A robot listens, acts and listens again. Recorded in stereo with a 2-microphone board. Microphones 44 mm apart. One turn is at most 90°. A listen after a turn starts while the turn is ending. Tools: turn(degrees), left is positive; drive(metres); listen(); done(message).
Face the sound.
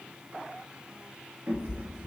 turn(degrees=-45)
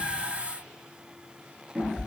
done("Facing the cat meowing.")